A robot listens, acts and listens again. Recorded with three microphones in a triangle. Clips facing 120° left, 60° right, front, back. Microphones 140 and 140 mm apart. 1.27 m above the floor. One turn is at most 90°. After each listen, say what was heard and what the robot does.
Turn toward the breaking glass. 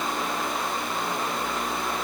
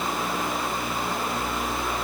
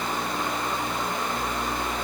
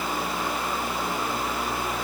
Keep listening.
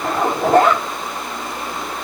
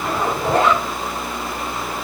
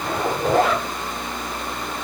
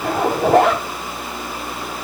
Keep listening.
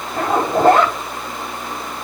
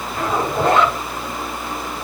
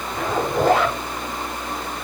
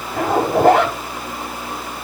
I can't make out breaking glass to turn to.